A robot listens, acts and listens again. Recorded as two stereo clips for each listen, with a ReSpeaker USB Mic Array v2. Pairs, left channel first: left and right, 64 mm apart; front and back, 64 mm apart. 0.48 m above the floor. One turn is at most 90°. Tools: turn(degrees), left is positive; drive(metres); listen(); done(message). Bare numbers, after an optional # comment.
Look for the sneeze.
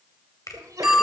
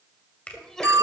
# The sneeze: 80° right.
turn(-80)
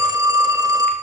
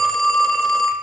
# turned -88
done("I heard a sneeze from this way, but can't make it out now.")